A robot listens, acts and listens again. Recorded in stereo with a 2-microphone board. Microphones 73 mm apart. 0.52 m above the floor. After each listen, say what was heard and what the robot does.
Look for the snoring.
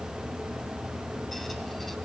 Keep listening.
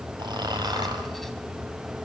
The snoring: about 75° right or 105° right. Turn 75° right.
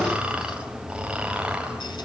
So it is at 15° right. Turn 15° right.
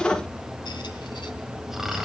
Facing the snoring, 2 to 4 m away.